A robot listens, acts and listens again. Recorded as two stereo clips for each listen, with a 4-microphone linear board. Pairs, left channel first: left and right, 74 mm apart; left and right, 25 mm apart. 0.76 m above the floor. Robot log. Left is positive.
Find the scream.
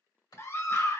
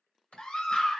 note: The scream: about 35° left or 145° left.
cmd yaw +35
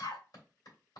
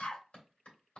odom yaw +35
note: So it is at 105° left.
cmd yaw +105
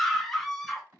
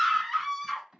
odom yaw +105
end: Found it: a scream, straight ahead, under 1 m away.